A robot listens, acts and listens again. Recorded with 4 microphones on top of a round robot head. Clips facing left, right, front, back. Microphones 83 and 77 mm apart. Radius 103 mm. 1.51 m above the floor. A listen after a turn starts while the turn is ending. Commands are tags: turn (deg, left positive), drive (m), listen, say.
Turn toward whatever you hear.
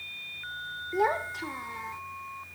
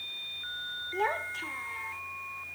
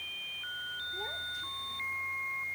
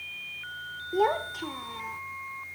<turn deg="165"/>
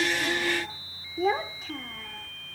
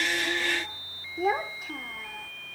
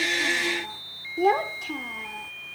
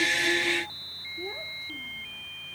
<turn deg="-10"/>
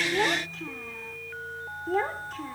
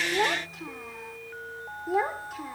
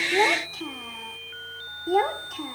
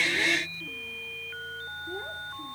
<turn deg="-10"/>
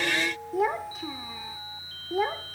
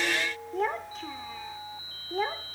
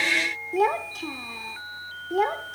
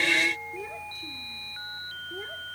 <say>Found it: a child speaking, straight ahead.</say>